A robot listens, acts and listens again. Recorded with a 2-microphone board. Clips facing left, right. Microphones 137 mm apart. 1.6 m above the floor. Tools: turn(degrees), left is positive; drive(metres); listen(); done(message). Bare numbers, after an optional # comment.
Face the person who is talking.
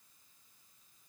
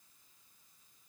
listen()
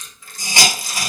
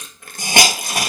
listen()
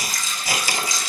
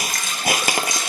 done("I can't make out anyone speaking to turn to.")